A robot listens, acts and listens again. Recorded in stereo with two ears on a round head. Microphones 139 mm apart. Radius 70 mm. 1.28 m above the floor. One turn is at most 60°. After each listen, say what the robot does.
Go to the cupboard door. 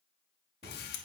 Turn 35° right.
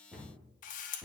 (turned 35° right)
Drive 1.0 m forward.
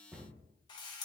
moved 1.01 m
Drive 1.0 m forward.
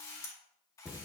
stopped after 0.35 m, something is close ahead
I am next to the cupboard door.